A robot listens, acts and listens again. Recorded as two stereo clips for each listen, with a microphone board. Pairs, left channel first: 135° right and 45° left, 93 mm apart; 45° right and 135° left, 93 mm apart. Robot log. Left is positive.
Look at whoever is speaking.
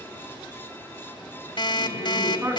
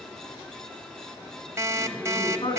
note: The woman speaking: 20° right.
cmd yaw -20
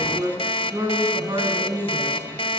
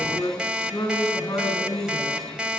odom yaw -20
end: Found it: a woman speaking, straight ahead.